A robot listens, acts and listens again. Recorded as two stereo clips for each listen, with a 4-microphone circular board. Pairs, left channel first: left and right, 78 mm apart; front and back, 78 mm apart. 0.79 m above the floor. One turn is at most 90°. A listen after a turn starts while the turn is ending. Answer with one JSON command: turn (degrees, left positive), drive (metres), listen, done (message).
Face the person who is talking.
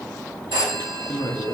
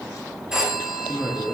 {"turn": 90}
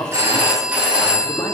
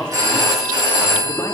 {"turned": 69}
{"turn": 50}
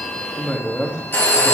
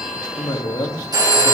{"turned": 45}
{"done": "Facing the woman speaking, 1 to 2 m away."}